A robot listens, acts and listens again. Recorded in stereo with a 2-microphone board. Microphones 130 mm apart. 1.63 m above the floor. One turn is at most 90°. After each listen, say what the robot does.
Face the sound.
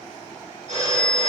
Turn 55° right.
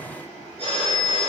Turn 50° right.
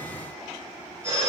Turn 20° right.
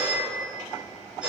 Found it: a phone ringing, straight ahead.